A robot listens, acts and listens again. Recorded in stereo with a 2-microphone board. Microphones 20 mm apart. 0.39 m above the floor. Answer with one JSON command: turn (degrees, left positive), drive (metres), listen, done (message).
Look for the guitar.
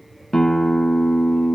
{"turn": 25}
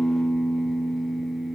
{"done": "Facing the guitar."}